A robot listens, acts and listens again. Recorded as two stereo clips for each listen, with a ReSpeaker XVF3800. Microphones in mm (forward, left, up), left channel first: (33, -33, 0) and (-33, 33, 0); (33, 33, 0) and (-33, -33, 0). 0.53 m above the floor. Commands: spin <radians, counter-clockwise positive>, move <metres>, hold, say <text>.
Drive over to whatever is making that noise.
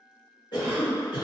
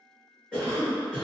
spin -0.61
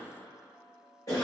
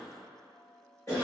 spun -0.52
move 1.0
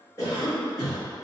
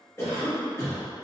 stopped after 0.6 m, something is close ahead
say I am next to the cough.